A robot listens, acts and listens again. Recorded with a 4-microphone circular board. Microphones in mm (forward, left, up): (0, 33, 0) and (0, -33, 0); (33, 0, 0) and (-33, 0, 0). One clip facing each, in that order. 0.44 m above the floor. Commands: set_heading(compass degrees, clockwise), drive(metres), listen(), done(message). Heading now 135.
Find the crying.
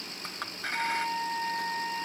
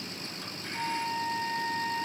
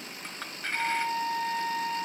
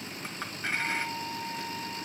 listen()
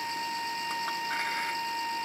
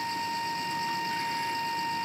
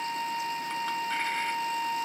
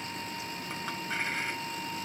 listen()
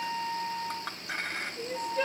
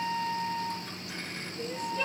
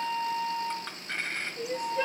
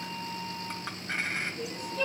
set_heading(95)
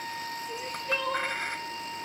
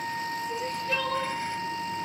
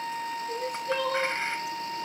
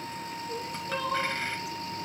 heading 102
done("Facing the crying.")